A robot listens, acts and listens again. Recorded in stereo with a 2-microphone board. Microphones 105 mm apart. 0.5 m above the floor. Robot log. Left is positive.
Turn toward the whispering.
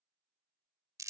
cmd idle
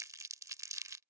cmd idle
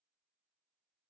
end: I can't make out whispering to turn to.